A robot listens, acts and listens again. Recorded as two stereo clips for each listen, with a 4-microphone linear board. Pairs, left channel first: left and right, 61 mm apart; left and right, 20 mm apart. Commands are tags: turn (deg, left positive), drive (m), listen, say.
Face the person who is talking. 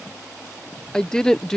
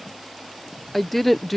<turn deg="30"/>
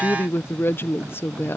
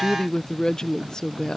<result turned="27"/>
<turn deg="145"/>
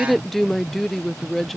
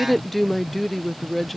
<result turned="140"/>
<say>Facing the woman speaking.</say>